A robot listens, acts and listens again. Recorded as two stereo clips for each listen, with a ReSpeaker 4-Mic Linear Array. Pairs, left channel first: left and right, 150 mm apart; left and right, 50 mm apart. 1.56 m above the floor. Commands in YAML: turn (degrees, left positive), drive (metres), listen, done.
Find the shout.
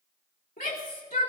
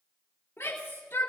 turn: 90
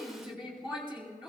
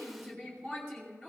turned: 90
done: "Facing the shout, 2 to 4 m away."